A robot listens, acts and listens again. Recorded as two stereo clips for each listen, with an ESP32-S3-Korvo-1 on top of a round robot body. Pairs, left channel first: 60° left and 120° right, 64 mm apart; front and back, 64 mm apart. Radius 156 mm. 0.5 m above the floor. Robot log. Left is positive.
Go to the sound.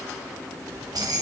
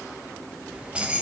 note: The keys jangling: 105° right.
cmd yaw -105
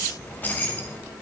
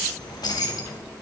cmd fwd 1.0
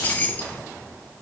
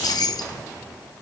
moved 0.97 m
cmd fwd 1.0
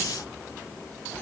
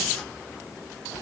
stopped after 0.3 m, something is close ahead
end: Arrived at the keys jangling, straight ahead.